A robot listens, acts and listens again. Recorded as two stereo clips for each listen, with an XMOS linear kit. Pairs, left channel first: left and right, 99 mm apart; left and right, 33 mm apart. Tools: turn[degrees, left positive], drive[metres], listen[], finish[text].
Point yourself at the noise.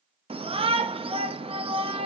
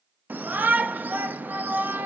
Thought: The shout: about 70° right or 110° right.
Action: turn[-70]
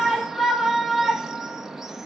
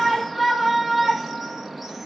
Action: finish[Facing the shout.]